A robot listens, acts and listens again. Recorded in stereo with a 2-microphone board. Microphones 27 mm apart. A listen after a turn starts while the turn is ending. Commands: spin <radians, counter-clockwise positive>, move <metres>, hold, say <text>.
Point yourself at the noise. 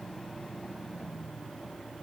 hold
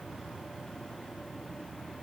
hold
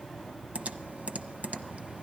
spin -1.05
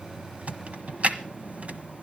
spin -1.05
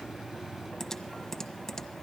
spin 0.26
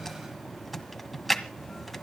say Facing the typing on a keyboard, 1 to 2 m away.